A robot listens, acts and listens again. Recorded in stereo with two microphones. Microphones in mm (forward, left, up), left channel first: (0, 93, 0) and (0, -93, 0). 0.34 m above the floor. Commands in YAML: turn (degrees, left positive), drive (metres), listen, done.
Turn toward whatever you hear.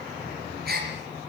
turn: -60
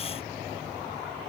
listen: true
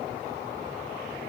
done: "I heard a gasp, but can't make it out now. It was about straight ahead or 60° right."